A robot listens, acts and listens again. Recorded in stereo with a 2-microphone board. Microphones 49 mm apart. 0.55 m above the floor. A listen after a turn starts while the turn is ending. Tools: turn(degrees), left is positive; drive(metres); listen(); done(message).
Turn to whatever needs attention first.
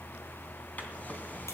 listen()
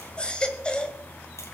turn(degrees=20)
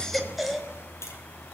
done("Found it: a baby crying, straight ahead, 1 to 2 m away.")